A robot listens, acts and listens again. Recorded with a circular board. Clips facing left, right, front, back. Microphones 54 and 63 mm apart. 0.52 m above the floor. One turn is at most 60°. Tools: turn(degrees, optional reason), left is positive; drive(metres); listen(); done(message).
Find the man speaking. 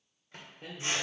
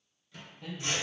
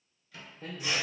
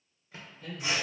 turn(degrees=45, reason="The man speaking: 45° left.")
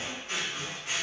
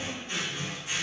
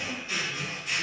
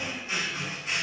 listen()
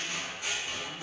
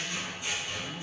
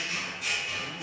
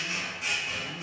turn(degrees=55, reason="The man speaking is now 55° left.")
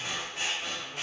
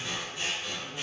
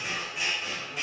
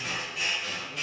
listen()
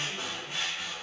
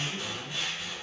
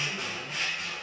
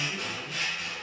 listen()
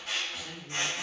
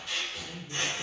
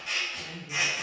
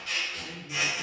turn(degrees=60, reason="The man speaking is now 60° left.")
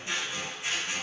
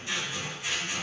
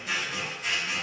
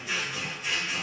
listen()
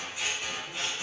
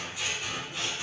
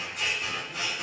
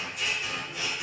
listen()
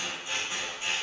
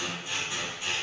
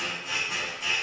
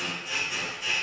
done("I heard a man speaking from this way, but can't make it out now.")